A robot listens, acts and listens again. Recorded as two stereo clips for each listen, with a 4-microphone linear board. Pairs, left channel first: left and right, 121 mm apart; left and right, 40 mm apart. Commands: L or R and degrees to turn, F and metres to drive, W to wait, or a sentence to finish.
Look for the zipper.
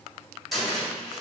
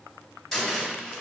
W
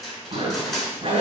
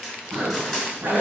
R50
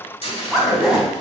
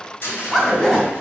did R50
Facing the zipper.